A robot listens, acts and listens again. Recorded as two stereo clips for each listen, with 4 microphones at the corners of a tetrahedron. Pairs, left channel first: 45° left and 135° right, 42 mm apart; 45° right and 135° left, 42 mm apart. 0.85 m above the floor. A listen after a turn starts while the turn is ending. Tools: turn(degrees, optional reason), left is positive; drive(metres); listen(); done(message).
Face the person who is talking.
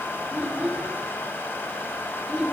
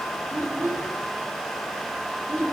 turn(degrees=150, reason="The child speaking: 150° left.")
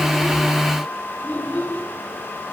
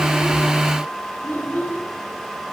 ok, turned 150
done("Facing the child speaking, over 4 m away.")